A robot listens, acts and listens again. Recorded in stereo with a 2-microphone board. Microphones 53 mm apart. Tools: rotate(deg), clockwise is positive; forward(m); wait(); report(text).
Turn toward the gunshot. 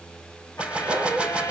rotate(20)
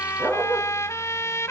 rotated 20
wait()
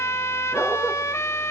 report("I heard a gunshot, but can't make it out now. It was about straight ahead or 140° right.")